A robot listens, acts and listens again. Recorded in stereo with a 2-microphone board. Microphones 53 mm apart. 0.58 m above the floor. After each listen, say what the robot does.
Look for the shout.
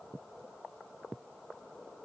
Keep listening.
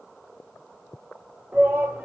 Turn 40° right.
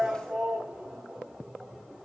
Facing the shout.